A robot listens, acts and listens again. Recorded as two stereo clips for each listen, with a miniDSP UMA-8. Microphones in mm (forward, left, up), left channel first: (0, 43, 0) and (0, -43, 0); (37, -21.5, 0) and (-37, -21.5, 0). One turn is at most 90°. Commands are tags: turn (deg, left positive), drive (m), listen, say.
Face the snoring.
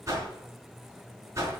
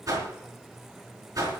<listen/>
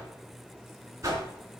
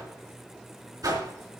<listen/>
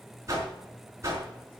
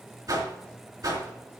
<say>I can't make out snoring to turn to.</say>